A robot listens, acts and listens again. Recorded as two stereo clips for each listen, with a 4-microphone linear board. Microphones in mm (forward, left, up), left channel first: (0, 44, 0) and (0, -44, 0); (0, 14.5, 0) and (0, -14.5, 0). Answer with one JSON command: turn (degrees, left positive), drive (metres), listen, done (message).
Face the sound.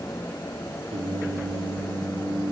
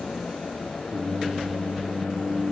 {"turn": -90}
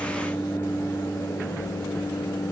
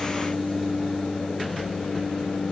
{"turn": 30}
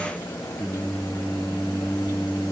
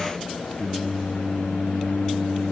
{"turn": 20}
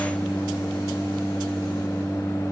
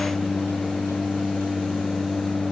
{"done": "Found it: singing, straight ahead."}